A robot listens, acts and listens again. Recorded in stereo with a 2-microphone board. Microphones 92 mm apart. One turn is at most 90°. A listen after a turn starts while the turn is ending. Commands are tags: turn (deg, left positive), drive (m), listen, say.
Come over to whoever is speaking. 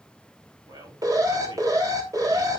<turn deg="-55"/>
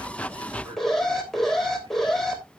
<turn deg="-65"/>
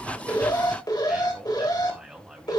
<drive m="1.0"/>
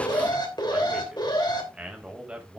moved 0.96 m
<turn deg="-10"/>
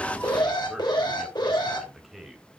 <drive m="1.0"/>
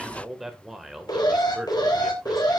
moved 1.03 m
<drive m="1.0"/>
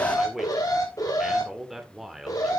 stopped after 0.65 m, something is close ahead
<say>Arrived at the man speaking, straight ahead.</say>